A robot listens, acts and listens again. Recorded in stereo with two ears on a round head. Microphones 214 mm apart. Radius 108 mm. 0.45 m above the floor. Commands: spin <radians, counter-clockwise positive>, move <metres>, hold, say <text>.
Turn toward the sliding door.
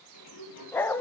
spin 1.57
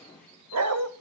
say Facing the sliding door, over 4 m away.